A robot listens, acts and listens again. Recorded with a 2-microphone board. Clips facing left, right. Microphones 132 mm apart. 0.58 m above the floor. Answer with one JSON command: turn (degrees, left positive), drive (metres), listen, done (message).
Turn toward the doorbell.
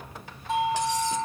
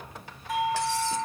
{"turn": 25}
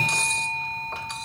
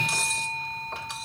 {"turn": 130}
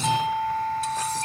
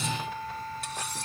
{"turn": 75}
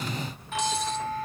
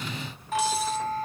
{"turn": -40}
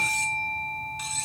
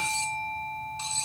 {"turn": -15}
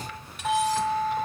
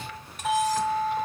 {"done": "Facing the doorbell, over 4 m away."}